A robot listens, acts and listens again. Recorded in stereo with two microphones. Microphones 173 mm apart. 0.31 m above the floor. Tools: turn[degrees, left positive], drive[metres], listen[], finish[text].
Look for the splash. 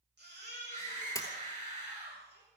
Thought: The splash: about 15° left or 165° left.
Action: turn[15]
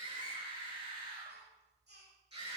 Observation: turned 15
Action: listen[]
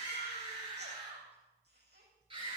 Action: finish[I heard a splash, but can't make it out now. It was about straight ahead or 150° left.]